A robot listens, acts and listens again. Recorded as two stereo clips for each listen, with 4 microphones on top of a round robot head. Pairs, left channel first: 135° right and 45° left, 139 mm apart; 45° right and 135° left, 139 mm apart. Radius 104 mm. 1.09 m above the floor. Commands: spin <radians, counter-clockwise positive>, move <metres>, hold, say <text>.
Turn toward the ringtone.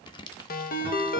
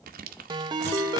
spin -2.79
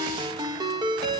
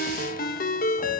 spin -0.35
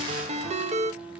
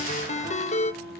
say Facing the ringtone.